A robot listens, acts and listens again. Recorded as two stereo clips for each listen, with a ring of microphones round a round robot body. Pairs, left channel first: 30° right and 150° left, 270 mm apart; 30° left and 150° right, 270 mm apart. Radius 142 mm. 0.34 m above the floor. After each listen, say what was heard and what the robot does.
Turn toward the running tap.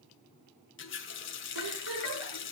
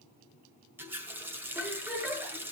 The running tap: 70° right. Turn 70° right.
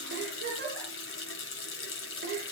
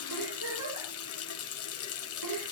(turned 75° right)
Found it: a running tap, straight ahead.